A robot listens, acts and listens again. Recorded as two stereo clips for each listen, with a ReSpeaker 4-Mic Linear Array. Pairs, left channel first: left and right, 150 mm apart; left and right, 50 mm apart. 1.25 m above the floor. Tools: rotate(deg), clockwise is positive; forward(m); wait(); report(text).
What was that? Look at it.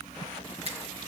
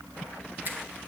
rotate(50)
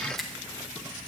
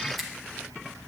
report("Found it: a finger snap, straight ahead.")